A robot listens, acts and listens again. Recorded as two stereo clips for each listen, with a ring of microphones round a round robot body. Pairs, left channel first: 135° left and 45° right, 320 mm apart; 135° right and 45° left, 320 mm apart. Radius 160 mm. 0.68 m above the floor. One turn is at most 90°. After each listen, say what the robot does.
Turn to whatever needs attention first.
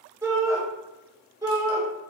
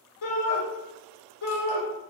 Turn 90° right.
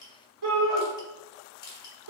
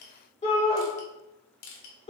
Turn 65° right.
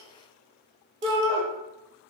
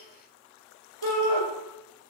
Turn 25° left.
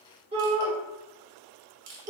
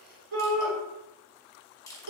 Turn 30° left.
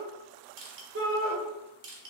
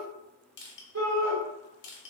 Facing the shout.